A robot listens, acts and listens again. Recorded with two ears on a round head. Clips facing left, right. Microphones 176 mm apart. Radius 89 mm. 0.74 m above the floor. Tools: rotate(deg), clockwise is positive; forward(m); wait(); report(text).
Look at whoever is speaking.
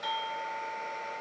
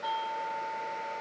wait()
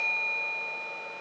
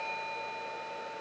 wait()
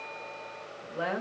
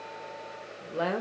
rotate(50)
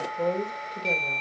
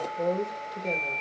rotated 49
report("Facing the woman speaking.")